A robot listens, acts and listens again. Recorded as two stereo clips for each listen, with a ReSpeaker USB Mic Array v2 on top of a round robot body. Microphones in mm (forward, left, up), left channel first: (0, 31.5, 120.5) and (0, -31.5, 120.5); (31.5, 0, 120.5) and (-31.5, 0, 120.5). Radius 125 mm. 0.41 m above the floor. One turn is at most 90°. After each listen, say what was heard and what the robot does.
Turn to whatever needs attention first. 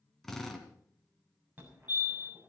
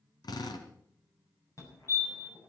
The fire alarm: 30° right. Turn 30° right.
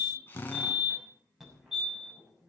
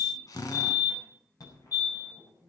Facing the fire alarm, over 4 m away.